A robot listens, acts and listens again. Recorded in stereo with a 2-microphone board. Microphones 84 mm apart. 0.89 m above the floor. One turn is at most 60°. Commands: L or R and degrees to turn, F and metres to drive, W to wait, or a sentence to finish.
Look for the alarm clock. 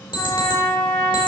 L60
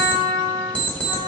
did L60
L15
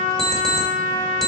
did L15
Facing the alarm clock.